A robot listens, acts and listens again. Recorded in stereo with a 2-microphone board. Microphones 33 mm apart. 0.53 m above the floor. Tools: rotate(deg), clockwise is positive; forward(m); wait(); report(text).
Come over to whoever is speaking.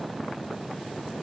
wait()
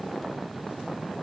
wait()
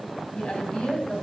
rotate(-40)
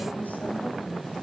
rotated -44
wait()
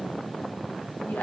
wait()
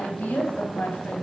rotate(-95)
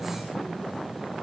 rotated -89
wait()
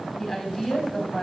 forward(1.0)
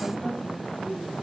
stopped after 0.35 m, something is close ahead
report("Blocked. The woman speaking is further on, straight ahead.")